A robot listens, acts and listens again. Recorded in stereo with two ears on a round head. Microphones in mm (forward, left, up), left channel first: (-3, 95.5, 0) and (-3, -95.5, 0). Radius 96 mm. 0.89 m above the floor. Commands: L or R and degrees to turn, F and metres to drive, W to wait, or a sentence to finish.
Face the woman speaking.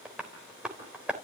W
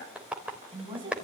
R25
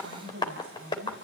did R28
R135
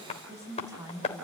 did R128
R20
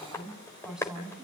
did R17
Found it: a woman speaking, straight ahead, over 4 m away.